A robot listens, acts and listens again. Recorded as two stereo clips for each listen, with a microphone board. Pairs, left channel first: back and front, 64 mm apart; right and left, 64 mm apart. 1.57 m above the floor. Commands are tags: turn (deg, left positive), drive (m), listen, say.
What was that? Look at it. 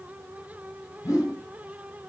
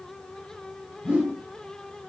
<turn deg="160"/>
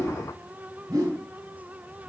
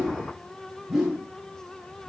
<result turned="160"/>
<say>Facing the whoosh, under 1 m away.</say>